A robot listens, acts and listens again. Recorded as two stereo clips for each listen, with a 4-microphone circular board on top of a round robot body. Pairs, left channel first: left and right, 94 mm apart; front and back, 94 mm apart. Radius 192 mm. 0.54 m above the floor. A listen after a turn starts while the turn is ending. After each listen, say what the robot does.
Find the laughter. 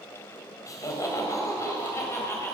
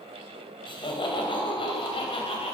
Turn 25° left.
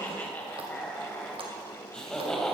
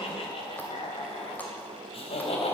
Found it: laughter, straight ahead, 2 to 4 m away.